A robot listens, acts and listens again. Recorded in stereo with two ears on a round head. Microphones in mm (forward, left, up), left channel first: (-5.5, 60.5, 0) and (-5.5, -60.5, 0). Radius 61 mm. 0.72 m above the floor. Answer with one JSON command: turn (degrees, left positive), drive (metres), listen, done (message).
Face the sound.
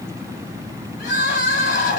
{"turn": 70}
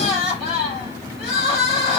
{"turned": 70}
{"done": "Found it: crying, straight ahead."}